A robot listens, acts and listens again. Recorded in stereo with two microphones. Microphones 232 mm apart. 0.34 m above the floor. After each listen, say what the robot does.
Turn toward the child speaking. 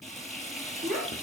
Turn 35° right.
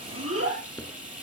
Turn 105° right.
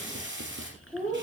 Facing the child speaking.